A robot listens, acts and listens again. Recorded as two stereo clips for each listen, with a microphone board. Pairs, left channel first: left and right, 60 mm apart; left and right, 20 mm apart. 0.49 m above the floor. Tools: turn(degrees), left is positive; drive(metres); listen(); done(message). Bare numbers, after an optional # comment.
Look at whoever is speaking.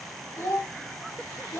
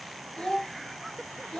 # The child speaking: about 50° left or 130° left.
turn(50)
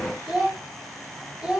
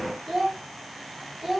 # So it is at 15° right.
turn(-15)
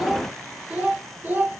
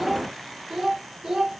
# The child speaking is now 35° right.
turn(-35)
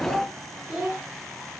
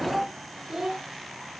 # The child speaking is now 15° right.
turn(-15)
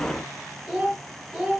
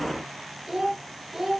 # The child speaking is now 10° right.
turn(-10)
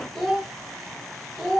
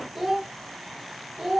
done("Found it: a child speaking, straight ahead, 1 to 2 m away.")